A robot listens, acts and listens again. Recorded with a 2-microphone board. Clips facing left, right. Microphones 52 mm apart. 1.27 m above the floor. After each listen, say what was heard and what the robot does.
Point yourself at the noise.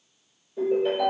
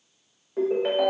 The ringtone: about 65° right or 115° right. Turn 65° right.
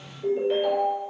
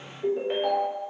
So it is at 25° right. Turn 25° right.
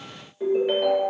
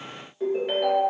Facing the ringtone, under 1 m away.